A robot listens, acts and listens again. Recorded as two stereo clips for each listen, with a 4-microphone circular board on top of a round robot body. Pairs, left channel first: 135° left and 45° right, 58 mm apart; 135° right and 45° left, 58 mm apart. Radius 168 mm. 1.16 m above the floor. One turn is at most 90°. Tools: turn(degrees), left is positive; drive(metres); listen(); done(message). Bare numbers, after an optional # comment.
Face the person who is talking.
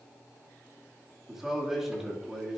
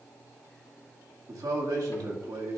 # The man speaking: 40° left.
turn(40)
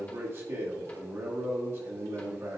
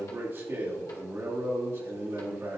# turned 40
done("Facing the man speaking, 2 to 4 m away.")